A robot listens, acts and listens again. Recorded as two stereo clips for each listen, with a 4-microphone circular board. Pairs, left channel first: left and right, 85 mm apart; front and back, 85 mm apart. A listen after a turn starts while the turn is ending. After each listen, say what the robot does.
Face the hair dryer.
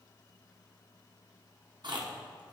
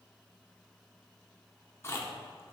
Keep listening.
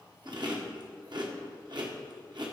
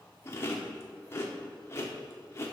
Keep listening.
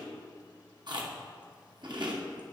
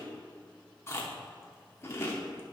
I can't make out a hair dryer to turn to.